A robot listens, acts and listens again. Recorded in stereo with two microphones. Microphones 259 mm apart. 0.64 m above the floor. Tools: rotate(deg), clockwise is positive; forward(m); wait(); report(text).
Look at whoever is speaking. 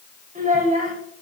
rotate(30)
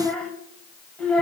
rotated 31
report("Found it: a child speaking, straight ahead.")